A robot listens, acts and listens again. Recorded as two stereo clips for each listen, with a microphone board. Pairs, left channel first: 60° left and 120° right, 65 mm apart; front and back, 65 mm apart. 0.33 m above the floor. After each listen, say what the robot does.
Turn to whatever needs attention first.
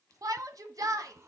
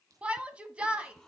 Turn 110° right.
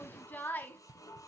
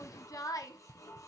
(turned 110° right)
Facing the shout.